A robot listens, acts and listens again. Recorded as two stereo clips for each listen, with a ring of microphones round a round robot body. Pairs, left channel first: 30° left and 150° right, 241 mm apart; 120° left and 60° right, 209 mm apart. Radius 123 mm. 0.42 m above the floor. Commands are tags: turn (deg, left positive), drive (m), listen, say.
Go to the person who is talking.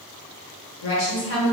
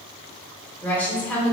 <turn deg="40"/>
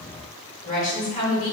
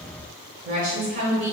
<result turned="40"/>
<turn deg="-20"/>
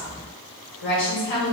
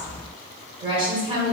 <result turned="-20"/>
<drive m="1.0"/>
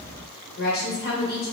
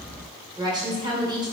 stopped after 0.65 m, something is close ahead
<say>I am next to the woman speaking.</say>